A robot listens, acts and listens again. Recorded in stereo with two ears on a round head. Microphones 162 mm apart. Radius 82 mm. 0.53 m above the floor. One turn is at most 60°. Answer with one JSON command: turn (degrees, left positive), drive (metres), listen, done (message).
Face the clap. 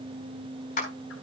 {"turn": 45}
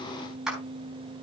{"done": "Found it: a clap, straight ahead."}